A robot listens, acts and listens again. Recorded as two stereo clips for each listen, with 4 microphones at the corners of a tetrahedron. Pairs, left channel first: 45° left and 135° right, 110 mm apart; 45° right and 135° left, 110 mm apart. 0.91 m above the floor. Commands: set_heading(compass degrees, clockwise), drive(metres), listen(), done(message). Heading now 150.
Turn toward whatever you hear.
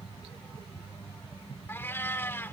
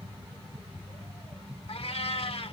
set_heading(170)
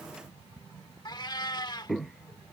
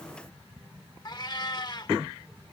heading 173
done("Facing the cat meowing.")